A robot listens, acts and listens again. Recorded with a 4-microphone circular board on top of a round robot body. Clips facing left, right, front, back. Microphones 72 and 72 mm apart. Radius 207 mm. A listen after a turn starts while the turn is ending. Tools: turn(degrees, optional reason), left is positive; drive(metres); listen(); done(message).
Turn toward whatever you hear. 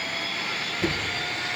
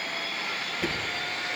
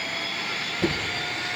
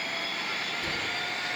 done("Facing the knocking, over 4 m away.")